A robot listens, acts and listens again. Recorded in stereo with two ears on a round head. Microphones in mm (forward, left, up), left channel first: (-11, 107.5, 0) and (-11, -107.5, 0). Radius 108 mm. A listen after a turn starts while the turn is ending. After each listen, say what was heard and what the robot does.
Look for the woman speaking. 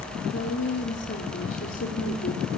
The woman speaking: about 50° left or 130° left. Turn 50° left.
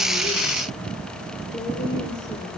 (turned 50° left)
Keep listening.
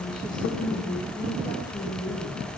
Keep listening.
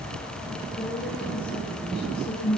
So it is at 20° left. Turn 20° left.
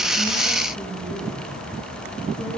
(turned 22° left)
Keep listening.
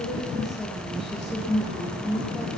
Facing the woman speaking, over 4 m away.